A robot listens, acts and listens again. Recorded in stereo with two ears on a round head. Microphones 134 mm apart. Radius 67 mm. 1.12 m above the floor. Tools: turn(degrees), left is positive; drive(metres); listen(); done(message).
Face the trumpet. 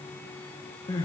listen()
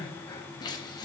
listen()
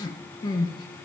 done("I can't make out a trumpet, only crying.")